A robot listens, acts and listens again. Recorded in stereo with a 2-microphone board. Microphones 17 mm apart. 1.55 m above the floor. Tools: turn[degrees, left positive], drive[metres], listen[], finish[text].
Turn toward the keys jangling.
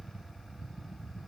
Action: listen[]
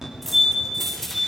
Action: turn[30]
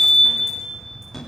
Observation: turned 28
Action: listen[]
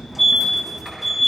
Action: listen[]
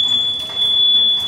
Action: finish[I heard keys jangling, but can't make it out now. It was about 20° right or 145° left.]